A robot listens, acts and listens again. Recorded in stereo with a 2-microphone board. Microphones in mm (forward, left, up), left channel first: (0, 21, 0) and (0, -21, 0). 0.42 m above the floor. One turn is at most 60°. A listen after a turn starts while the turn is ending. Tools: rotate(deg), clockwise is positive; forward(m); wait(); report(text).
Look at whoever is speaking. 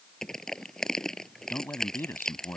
rotate(-60)
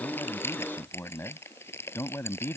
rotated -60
rotate(-60)
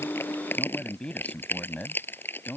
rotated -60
rotate(-25)
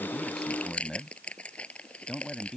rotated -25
report("Facing the man speaking.")